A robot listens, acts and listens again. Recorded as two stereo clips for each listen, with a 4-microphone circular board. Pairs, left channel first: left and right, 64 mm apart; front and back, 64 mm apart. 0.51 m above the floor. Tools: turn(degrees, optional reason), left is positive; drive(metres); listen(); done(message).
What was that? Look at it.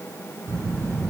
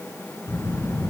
turn(degrees=-45, reason="The child speaking: 45° right.")
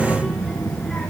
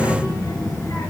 done("Found it: a child speaking, straight ahead.")